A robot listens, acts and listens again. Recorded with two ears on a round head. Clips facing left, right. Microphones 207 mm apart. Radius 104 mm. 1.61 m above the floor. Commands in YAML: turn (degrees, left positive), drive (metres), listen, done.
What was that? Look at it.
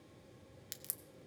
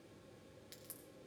turn: 65
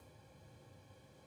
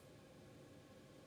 listen: true
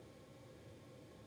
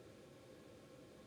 done: "I heard a crack, but can't make it out now. It was about straight ahead or 50° left."